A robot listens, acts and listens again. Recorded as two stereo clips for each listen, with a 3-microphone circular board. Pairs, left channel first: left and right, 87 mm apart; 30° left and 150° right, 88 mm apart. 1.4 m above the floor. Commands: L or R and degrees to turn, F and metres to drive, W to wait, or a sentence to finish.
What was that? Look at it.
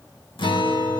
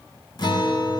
L65
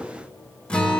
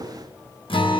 L10
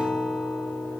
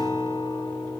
Facing the guitar, under 1 m away.